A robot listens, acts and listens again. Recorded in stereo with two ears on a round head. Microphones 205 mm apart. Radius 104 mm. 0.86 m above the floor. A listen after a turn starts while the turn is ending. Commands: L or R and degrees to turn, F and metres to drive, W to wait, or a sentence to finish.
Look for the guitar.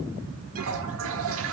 W
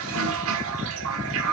W
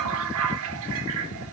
I can't make out a guitar to turn to.